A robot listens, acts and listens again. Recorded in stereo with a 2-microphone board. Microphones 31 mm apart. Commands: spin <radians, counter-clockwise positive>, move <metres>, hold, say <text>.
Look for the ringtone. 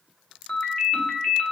spin 0.70
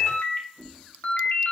spin 1.75
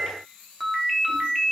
say Found it: a ringtone, straight ahead.